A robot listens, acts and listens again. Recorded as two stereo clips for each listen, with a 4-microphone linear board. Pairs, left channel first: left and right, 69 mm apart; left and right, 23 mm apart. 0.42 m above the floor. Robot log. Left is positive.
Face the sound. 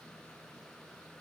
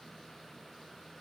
cmd idle
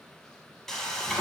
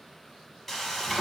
cmd yaw +30
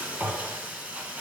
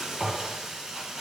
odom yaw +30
note: So it is at 25° right.
cmd yaw -25
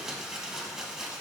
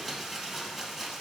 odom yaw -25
note: The frying is now 10° right.
cmd yaw -10
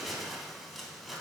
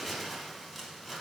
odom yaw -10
end: Facing the frying, 1 to 2 m away.